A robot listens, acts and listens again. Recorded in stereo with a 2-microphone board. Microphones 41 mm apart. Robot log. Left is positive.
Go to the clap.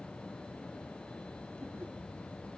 cmd idle
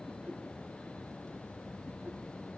cmd idle
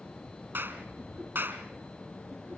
note: The clap: about 65° right or 115° right.
cmd yaw -65
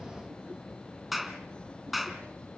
cmd fwd 1.0
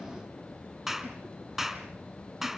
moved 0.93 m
note: The clap is now 15° right.
cmd yaw -15
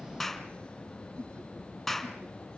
cmd fwd 1.0
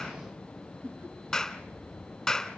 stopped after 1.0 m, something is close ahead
note: The clap is now 15° left.
cmd yaw +15
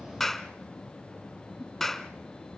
end: I am next to the clap.